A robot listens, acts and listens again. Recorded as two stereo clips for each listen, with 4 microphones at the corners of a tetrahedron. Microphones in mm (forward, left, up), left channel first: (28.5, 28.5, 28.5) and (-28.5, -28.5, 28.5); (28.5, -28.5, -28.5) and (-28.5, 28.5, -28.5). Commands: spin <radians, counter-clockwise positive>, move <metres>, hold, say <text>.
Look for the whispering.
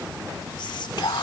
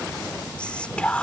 spin 0.52
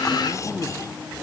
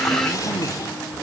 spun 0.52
hold
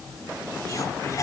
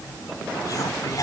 say Facing the whispering.